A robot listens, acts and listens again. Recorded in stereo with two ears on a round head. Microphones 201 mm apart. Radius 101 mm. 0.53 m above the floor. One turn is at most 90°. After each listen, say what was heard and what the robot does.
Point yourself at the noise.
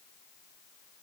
Keep listening.
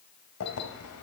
Turn 90° left.
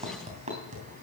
So it is at 30° right. Turn 30° right.
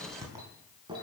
The keys jangling is now 20° right. Turn 20° right.
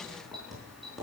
Found it: keys jangling, straight ahead.